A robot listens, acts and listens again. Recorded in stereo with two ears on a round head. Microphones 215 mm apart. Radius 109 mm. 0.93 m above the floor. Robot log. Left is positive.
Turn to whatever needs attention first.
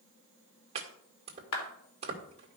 cmd idle
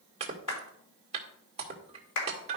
cmd idle
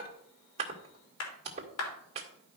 end: I can't make out anything urgent to turn to.